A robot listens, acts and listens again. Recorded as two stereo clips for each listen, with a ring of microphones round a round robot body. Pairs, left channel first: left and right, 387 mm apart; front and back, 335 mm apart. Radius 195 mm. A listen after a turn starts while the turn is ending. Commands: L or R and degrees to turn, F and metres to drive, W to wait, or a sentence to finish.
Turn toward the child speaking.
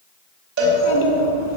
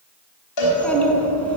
L85
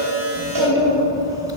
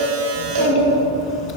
R10
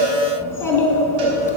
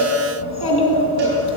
Found it: a child speaking, straight ahead.